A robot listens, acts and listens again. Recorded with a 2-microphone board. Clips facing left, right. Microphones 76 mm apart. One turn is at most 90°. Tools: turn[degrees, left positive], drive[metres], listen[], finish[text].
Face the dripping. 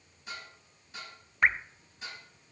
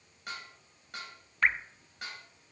Thought: The dripping: about 15° left or 165° left.
Action: turn[15]
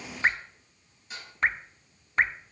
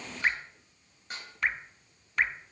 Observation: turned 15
Thought: So it is at 150° left.
Action: turn[90]
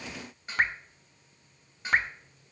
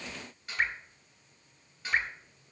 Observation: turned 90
Thought: The dripping is now 60° left.
Action: turn[60]
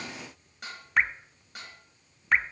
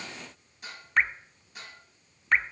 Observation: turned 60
Action: finish[Found it: dripping, straight ahead, under 1 m away.]